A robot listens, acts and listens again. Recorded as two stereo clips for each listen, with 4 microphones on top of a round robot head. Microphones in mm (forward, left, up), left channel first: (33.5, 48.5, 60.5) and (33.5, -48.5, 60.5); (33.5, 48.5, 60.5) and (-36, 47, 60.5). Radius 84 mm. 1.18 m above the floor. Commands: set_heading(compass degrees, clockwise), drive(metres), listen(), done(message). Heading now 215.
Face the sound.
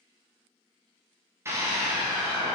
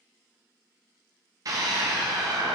set_heading(5)
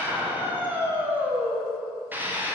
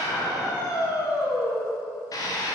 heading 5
set_heading(25)
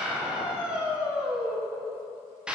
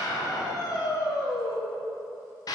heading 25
set_heading(35)
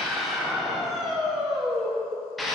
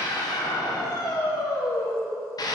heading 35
done("Facing the scream, under 1 m away.")